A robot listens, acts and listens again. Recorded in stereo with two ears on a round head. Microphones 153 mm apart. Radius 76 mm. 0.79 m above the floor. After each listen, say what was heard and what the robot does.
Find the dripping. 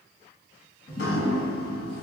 The dripping: about 70° left or 110° left. Turn 70° left.
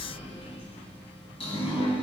So it is at 35° left. Turn 35° left.
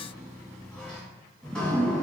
Found it: dripping, straight ahead, 1 to 2 m away.